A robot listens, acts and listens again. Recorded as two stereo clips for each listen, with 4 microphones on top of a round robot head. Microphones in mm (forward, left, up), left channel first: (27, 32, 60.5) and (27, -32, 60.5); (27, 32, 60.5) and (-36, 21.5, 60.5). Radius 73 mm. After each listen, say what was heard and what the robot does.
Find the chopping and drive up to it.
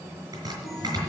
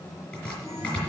The chopping: 60° right. Turn 60° right.
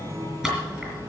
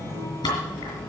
Drive 1.0 m forward.
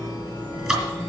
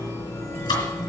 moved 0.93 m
Drive 1.0 m forward.
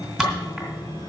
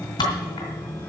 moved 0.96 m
Drive 1.0 m forward.
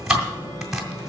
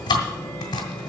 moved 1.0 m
Drive 1.0 m forward.
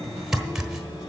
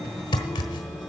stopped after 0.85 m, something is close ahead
The chopping is now 10° right. Turn 10° right.
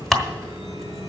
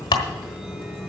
Arrived at the chopping, straight ahead.